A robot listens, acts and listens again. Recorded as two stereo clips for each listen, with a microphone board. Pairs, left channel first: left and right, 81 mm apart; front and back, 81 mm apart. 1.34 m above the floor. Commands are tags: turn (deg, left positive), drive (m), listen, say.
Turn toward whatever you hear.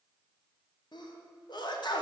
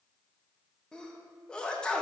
<turn deg="80"/>
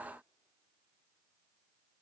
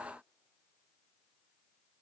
<say>I heard a sneeze from this way, but can't make it out now.</say>